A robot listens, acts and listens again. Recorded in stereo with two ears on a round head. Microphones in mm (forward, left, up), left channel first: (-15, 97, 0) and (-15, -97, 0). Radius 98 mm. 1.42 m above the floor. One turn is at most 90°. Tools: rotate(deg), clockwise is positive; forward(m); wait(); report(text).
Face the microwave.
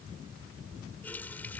wait()
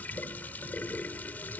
wait()
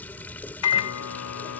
rotate(-90)
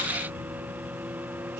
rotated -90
rotate(10)
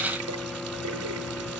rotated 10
report("Found it: a microwave, straight ahead.")